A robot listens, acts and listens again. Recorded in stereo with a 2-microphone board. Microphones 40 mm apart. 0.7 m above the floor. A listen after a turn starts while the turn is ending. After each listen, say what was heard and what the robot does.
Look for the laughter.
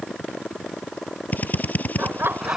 Turn 90° right.
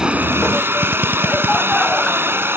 Keep listening.
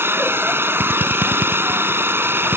Keep listening.
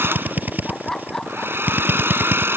The laughter is now 10° left. Turn 10° left.
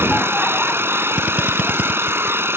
Keep listening.
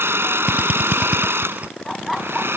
Facing the laughter.